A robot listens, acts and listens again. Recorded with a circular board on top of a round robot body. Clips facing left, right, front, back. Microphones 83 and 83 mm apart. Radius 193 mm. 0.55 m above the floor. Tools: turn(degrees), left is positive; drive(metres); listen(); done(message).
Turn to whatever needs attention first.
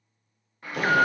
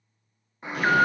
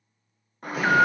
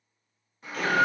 turn(degrees=-25)
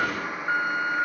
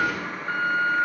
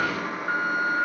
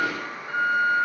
turn(degrees=10)
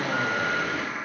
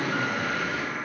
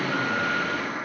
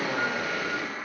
done("Facing the alarm.")